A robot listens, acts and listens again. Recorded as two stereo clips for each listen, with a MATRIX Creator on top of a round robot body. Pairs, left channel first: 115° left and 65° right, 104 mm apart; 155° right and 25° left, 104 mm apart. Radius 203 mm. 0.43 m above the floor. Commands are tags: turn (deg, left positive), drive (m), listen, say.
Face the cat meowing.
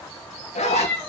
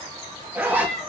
<turn deg="-160"/>
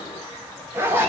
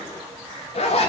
<listen/>
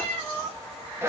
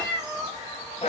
<turn deg="-35"/>
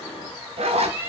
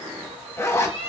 <turn deg="10"/>
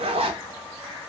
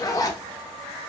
<listen/>
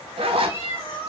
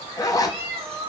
<say>Found it: a cat meowing, straight ahead, 1 to 2 m away.</say>